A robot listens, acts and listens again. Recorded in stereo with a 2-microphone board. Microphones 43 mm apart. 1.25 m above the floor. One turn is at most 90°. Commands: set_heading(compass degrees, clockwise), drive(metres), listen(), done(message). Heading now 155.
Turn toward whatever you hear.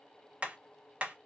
set_heading(185)
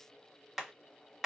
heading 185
done("Found it: hammering, straight ahead, 1 to 2 m away.")